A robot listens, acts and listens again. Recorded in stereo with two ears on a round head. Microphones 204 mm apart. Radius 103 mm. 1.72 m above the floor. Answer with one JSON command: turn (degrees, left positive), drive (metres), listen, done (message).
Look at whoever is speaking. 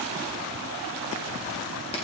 {"listen": true}
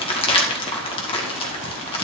{"listen": true}
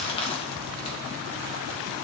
{"done": "I can't make out anyone speaking, only crumpling."}